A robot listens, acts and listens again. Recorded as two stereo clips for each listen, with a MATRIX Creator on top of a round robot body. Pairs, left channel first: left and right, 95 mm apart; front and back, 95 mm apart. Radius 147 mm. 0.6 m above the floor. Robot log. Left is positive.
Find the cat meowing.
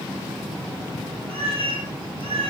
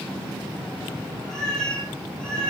note: The cat meowing: 80° right.
cmd yaw -80
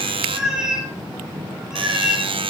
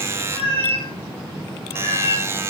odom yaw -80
end: Facing the cat meowing, over 4 m away.